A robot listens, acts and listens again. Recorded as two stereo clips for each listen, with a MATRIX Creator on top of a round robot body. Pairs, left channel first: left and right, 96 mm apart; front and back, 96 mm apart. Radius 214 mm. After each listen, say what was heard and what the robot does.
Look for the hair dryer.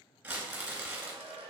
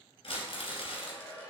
The hair dryer: 70° right. Turn 70° right.
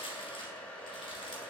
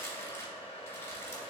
The hair dryer is now 15° left. Turn 15° left.
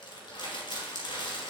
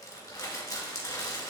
Keep listening.
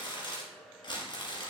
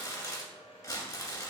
Found it: a hair dryer, straight ahead, under 1 m away.